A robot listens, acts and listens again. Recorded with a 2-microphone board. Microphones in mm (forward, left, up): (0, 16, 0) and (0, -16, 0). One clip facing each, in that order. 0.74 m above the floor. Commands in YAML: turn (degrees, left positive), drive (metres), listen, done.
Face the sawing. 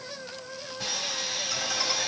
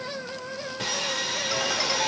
turn: -55
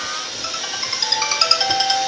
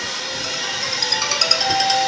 turn: -70
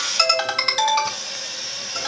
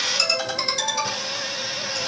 turn: -30
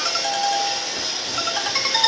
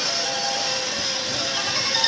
done: "Found it: sawing, straight ahead."